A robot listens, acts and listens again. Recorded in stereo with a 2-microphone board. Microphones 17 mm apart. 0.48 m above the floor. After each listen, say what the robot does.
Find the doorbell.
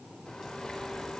Keep listening.
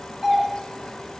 Turn 15° right.
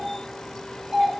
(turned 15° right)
Turn 150° right.
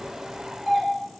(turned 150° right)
Found it: a doorbell, straight ahead, 2 to 4 m away.